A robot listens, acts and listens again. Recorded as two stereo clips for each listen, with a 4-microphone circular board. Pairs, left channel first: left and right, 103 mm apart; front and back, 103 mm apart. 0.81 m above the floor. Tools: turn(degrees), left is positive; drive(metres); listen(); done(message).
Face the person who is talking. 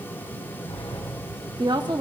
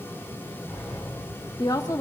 turn(degrees=-50)
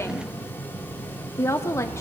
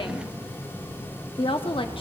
turn(degrees=30)
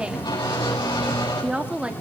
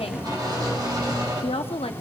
turn(degrees=-10)
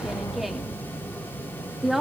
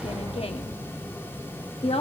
done("Facing the woman speaking, 1 to 2 m away.")